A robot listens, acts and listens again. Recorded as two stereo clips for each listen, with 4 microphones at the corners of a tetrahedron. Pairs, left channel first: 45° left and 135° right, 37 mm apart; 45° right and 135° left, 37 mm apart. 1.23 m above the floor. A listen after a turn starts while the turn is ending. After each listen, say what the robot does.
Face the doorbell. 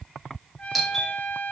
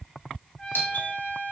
Turn 45° right.
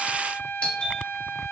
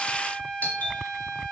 Turn 10° right.
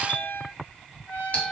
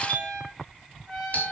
Facing the doorbell, over 4 m away.